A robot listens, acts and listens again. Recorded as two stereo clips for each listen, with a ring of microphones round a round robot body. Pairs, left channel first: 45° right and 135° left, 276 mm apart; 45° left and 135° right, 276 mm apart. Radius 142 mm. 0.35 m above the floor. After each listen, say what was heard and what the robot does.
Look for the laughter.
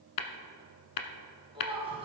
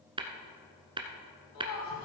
The laughter: 65° left. Turn 65° left.
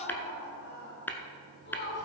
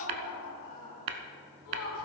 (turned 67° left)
The laughter is now 10° left. Turn 10° left.
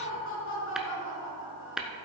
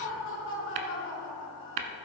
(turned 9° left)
Found it: laughter, straight ahead, 2 to 4 m away.